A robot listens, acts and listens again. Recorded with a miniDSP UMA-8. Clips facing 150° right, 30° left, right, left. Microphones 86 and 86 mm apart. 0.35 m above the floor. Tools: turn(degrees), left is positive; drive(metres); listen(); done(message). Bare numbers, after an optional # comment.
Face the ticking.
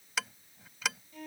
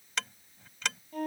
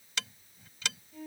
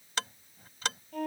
# The ticking: 130° left.
turn(130)
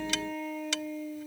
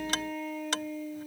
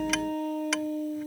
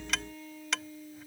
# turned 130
done("Found it: ticking, straight ahead.")